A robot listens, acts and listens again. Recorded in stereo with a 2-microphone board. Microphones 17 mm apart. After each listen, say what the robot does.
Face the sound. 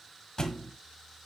Turn 45° left.
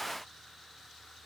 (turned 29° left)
Keep listening.
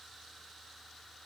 I heard a thud, but can't make it out now. It was about 15° left or 105° left.